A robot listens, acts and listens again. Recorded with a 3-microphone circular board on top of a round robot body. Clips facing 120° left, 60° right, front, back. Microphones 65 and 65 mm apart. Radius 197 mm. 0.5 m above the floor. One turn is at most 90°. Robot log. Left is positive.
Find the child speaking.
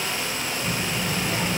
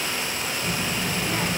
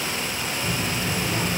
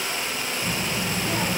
note: The child speaking: 155° right.
cmd yaw -90
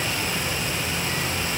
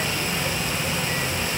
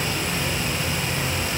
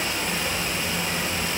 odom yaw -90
note: The child speaking is now 115° right.
cmd yaw -90
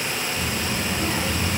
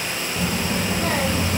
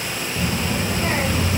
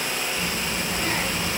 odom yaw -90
note: The child speaking is now 65° right.
cmd yaw -65
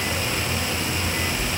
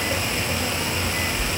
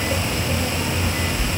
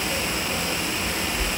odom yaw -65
end: Facing the child speaking.